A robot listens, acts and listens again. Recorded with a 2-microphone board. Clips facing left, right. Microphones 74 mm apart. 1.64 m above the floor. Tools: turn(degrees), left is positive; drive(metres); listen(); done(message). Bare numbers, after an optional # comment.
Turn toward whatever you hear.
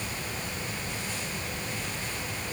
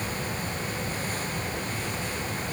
listen()
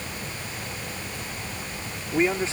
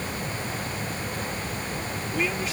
# The man speaking: about 30° left or 150° left.
turn(30)
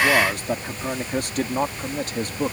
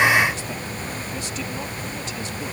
# So it is at 130° left.
turn(130)
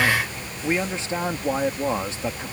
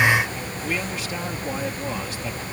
# The man speaking is now 30° left.
turn(30)
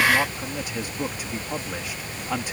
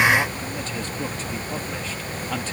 # The man speaking is now 15° left.
turn(15)
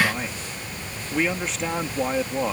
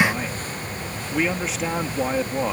done("Facing the man speaking.")